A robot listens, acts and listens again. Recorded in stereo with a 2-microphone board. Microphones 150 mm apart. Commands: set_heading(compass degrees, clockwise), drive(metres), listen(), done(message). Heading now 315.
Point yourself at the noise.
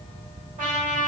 set_heading(25)
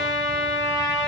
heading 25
set_heading(55)
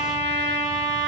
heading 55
set_heading(85)
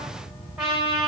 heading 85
done("Facing the trumpet.")